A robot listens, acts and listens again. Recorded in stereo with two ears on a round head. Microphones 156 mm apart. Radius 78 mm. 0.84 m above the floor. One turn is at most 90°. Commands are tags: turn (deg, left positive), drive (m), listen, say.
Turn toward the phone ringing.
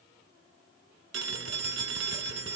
<turn deg="-65"/>
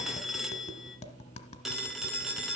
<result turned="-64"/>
<say>Facing the phone ringing, 1 to 2 m away.</say>